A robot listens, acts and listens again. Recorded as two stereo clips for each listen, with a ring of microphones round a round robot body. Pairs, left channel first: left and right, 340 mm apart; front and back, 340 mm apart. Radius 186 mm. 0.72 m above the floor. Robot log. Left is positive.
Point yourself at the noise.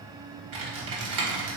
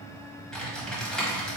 note: The typing on a keyboard: 90° right.
cmd yaw -90
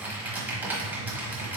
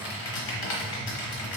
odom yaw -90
end: Facing the typing on a keyboard, 1 to 2 m away.